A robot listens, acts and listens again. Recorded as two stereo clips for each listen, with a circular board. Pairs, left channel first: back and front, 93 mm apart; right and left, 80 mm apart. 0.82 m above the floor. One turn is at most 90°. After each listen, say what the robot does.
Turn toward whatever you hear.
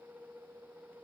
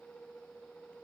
Keep listening.
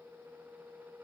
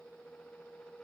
Keep listening.
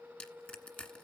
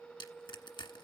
Turn 90° right.
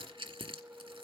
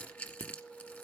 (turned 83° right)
Turn 20° right.
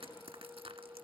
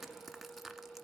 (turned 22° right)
Found it: crushing, straight ahead.